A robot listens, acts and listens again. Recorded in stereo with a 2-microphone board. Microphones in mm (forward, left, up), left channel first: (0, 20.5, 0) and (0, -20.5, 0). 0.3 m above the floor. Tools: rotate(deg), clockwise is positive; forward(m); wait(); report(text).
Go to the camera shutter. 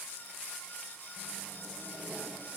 wait()
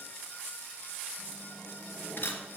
rotate(-50)
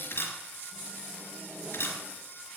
rotate(-75)
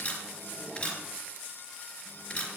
rotate(-35)
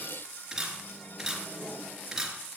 rotate(10)
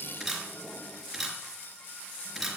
forward(1.0)
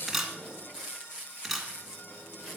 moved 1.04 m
forward(1.0)
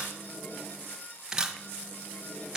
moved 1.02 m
rotate(20)
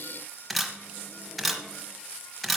forward(1.0)
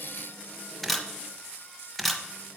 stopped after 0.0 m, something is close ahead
report("I am next to the camera shutter.")